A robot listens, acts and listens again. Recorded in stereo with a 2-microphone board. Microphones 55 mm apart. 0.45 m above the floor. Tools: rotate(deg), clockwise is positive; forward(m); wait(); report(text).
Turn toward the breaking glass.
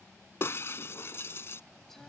rotate(-50)
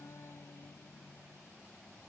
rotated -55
wait()
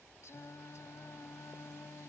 report("I heard breaking glass, but can't make it out now. It was about 5° right or 75° left.")